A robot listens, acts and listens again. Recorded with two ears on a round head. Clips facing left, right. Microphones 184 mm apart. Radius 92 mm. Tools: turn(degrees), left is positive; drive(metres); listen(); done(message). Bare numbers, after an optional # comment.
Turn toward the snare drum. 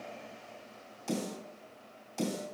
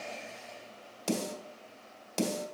turn(-90)
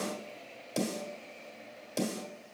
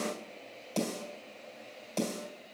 # So it is at 10° left.
turn(10)
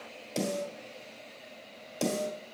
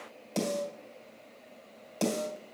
done("Found it: a snare drum, straight ahead, 2 to 4 m away.")